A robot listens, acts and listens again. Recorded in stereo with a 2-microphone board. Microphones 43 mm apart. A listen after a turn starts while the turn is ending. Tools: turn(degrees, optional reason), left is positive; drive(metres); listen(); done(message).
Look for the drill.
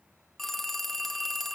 listen()
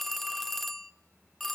listen()
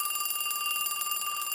done("I can't make out a drill, only a phone ringing.")